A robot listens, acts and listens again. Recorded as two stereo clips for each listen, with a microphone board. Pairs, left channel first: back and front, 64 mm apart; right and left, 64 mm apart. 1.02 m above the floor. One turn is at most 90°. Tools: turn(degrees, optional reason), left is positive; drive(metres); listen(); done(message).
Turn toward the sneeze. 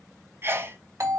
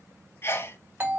turn(degrees=-45, reason="The sneeze: 45° right.")
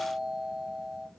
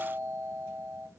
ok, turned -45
done("Facing where the sneeze came from. I can't hear it now.")